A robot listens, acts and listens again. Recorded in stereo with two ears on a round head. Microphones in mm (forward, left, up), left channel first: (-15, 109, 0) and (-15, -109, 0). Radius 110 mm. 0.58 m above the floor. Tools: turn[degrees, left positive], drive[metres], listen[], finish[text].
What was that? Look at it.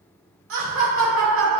Thought: The laughter: about 55° right or 125° right.
Action: turn[-55]
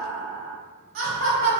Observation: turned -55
Thought: So it is at 65° right.
Action: turn[-65]
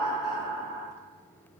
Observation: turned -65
Thought: The laughter is now 20° right.
Action: turn[-20]
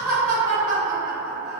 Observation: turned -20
Thought: The laughter is now 20° right.
Action: turn[-20]
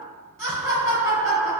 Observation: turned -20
Action: finish[Facing the laughter, 2 to 4 m away.]